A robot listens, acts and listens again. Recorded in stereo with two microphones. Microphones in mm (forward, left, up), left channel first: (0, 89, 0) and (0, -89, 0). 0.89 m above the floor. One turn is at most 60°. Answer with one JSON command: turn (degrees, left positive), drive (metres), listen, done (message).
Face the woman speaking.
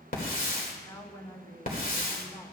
{"turn": 20}
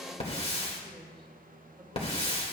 {"listen": true}
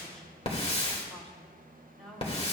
{"turn": 30}
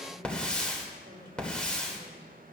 {"listen": true}
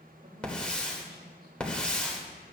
{"listen": true}
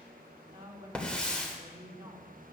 {"turn": -30}
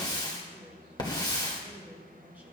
{"listen": true}
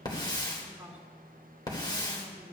{"turn": -10}
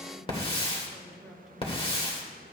{"listen": true}
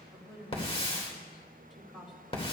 {"done": "Found it: a woman speaking, straight ahead, 2 to 4 m away."}